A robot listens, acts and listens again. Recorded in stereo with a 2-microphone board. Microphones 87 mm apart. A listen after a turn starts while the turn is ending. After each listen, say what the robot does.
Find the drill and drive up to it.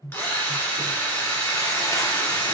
Turn 25° left.
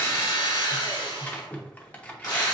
Turn 130° left.
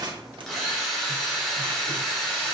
Drive 1.0 m forward.
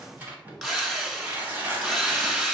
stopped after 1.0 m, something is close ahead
I am next to the drill.